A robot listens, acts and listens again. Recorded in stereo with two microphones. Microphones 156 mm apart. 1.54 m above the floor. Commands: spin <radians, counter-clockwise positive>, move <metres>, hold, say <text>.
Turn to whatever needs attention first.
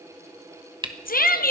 spin 1.57
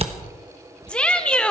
spin 0.17
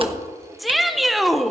say Facing the shout, 1 to 2 m away.